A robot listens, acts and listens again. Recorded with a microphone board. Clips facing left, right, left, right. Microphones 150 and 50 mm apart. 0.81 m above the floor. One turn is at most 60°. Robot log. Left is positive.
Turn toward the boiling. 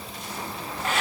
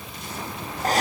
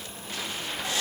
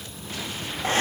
cmd idle
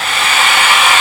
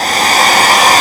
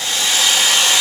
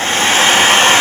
cmd idle
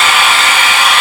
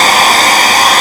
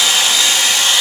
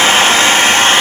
end: I can't make out boiling, only a hair dryer.